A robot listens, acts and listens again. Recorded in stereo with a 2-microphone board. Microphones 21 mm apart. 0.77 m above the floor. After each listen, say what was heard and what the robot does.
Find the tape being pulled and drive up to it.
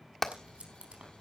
Turn 90° right.
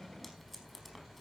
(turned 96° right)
Drive 1.0 m forward.
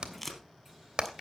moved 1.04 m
The tape being pulled is now 10° left. Turn 10° left.
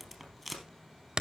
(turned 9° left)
Drive 1.0 m forward.
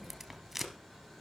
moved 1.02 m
Drive 1.0 m forward.
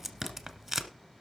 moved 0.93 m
The tape being pulled is now 10° right. Turn 10° right.
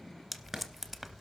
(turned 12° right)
Drive 1.0 m forward.
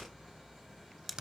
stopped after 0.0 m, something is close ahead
Arrived at the tape being pulled, straight ahead.